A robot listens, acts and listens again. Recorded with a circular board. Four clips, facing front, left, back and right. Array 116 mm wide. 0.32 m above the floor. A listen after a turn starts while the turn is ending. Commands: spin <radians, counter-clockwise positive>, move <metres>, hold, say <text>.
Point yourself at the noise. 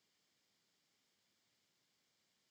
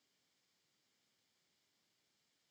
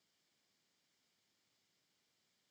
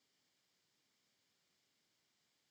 hold
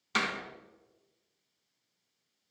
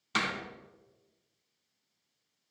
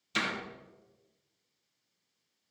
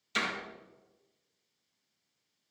spin 0.79
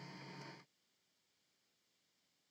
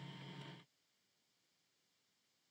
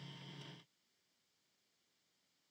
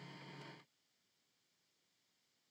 say Facing where the door slam came from. I can't hear it now.